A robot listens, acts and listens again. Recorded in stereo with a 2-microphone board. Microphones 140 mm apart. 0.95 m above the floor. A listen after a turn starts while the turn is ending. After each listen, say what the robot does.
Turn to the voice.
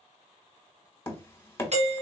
Keep listening.
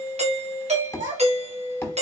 Turn 90° right.
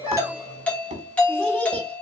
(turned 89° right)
Keep listening.
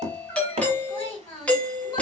Turn 20° left.
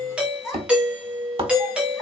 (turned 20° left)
Found it: a child speaking, straight ahead, 2 to 4 m away.